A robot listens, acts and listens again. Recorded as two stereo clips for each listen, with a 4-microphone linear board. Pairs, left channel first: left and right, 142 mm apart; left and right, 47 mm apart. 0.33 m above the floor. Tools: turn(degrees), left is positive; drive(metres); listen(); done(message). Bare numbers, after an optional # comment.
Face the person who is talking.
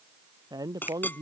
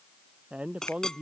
# The man speaking: about 25° right or 155° right.
turn(-25)
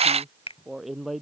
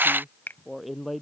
done("Facing the man speaking.")